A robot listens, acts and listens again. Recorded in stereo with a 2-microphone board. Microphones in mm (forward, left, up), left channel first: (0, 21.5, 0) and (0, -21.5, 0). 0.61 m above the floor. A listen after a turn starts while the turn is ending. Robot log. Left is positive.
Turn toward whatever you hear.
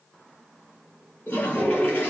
note: The toilet flushing: about 60° left or 120° left.
cmd yaw +60
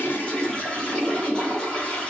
note: So it is at 20° left.
cmd yaw +20
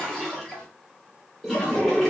end: Found it: a toilet flushing, straight ahead, 2 to 4 m away.